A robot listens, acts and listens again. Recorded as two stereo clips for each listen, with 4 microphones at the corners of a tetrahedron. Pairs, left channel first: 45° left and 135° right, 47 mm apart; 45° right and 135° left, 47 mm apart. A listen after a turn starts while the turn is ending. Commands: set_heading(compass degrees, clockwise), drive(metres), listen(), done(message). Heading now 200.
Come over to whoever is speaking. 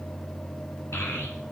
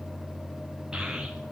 set_heading(140)
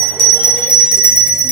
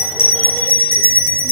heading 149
set_heading(139)
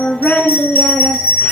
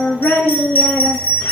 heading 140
drive(1.0)
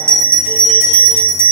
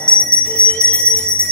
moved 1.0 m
listen()
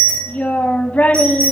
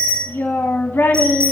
set_heading(150)
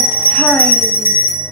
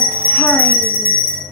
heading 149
listen()
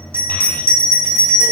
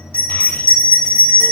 listen()
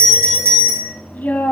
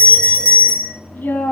drive(1.0)
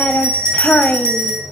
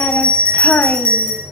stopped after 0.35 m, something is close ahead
done("I am next to the child speaking.")